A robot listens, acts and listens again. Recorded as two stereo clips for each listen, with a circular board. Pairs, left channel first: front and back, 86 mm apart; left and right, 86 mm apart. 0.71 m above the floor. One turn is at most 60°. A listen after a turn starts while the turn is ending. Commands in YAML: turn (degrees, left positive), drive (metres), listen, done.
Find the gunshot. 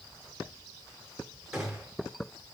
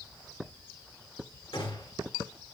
turn: 60
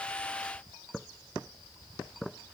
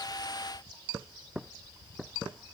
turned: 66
turn: 35
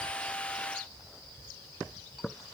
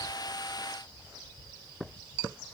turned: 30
done: "Facing where the gunshot came from. I can't hear it now."